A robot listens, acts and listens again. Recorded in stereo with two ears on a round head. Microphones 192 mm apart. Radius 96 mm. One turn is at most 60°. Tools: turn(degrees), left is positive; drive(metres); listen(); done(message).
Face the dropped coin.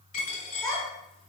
turn(degrees=40)
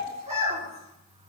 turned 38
listen()
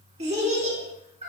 done("I heard a dropped coin, but can't make it out now. It was about straight ahead or 105° left.")